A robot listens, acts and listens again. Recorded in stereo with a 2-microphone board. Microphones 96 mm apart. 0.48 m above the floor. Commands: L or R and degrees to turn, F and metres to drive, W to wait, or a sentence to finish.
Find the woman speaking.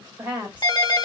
R15
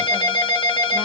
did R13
W
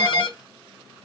W
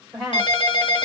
Facing the woman speaking.